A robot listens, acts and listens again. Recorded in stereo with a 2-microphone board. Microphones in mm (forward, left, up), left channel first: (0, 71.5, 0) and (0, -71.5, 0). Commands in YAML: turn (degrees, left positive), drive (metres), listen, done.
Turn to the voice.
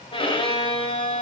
listen: true
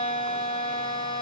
listen: true
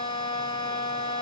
done: "I can't make out anyone speaking to turn to."